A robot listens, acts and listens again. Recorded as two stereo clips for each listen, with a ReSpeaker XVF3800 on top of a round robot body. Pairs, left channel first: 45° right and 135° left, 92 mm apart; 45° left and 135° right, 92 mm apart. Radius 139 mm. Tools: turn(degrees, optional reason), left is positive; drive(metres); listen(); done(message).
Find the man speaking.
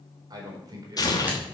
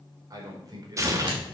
turn(degrees=180, reason="The man speaking: straight behind.")
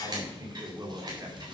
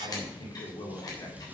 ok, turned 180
turn(degrees=90, reason="The man speaking is now 90° left.")
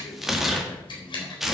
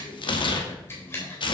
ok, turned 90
listen()
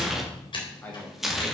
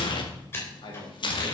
turn(degrees=20, reason="The man speaking is now 20° left.")
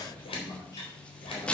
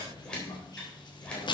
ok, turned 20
listen()
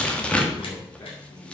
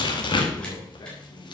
listen()
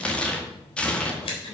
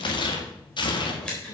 done("I heard a man speaking from this way, but can't make it out now.")